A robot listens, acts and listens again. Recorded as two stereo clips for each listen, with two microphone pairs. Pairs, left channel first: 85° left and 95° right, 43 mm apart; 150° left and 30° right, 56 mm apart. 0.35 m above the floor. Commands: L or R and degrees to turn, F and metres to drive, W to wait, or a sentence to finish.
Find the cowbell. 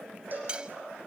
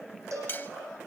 R50
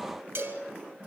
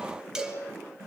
Facing the cowbell.